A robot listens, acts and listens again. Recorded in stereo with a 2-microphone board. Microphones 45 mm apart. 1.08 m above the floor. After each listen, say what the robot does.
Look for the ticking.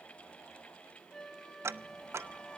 Turn 75° right.
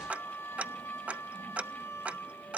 Turn 30° right.
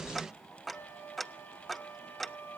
Facing the ticking, under 1 m away.